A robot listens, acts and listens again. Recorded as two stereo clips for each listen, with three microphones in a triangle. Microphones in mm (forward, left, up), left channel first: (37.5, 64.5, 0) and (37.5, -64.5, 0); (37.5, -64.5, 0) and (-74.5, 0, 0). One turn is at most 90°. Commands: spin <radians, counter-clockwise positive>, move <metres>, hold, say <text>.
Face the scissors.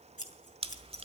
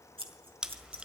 spin 1.57
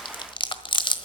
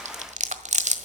spin 0.26
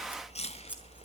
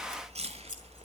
spin -0.17
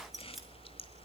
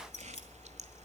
say Found it: scissors, straight ahead, 2 to 4 m away.